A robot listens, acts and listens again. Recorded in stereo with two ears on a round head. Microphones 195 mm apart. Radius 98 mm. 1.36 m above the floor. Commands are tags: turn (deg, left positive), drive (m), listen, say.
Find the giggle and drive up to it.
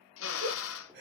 <turn deg="-55"/>
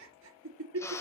<turn deg="-65"/>
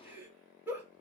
<turn deg="-10"/>
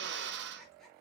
<listen/>
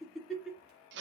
<drive m="1.0"/>
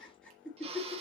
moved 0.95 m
<drive m="1.0"/>
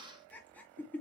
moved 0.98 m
<turn deg="10"/>
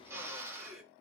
<drive m="1.0"/>
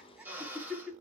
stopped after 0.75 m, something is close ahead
<say>Arrived at the giggle, straight ahead.</say>